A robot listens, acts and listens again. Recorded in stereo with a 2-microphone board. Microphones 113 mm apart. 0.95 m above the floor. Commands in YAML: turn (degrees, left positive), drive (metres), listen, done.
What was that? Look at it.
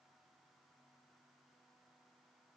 listen: true
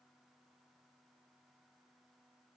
listen: true
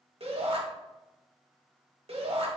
turn: -55
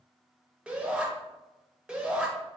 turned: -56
turn: -10
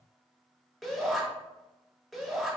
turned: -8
done: "Found it: a shout, straight ahead, 1 to 2 m away."